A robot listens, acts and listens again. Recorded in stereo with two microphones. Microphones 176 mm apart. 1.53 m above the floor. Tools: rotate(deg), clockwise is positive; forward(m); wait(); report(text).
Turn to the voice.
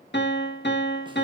wait()
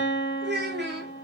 rotate(70)
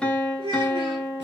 rotate(30)
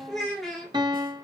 report("Facing the child speaking, 2 to 4 m away.")